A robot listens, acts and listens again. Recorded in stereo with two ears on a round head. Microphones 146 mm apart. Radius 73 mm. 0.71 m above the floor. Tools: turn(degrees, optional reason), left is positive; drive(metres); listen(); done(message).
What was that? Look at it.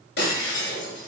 turn(degrees=75, reason="The breaking glass: about 75° left or 105° left.")
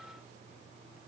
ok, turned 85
listen()
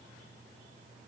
done("I heard breaking glass, but can't make it out now. It was about 10° right or 20° left.")